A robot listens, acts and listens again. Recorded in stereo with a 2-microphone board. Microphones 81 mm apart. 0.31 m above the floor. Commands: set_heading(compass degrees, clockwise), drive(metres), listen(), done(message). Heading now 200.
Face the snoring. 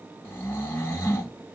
set_heading(170)
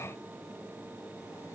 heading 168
listen()
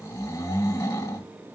set_heading(48)
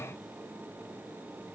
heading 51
listen()
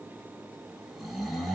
done("Found it: snoring, straight ahead, 1 to 2 m away.")